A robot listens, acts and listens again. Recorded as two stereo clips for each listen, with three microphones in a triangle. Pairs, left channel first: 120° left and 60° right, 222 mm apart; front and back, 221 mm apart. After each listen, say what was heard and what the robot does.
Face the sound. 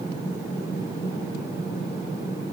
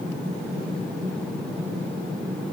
Keep listening.
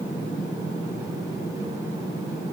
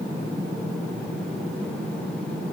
Keep listening.
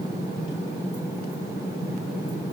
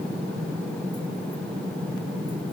I can't make out anything.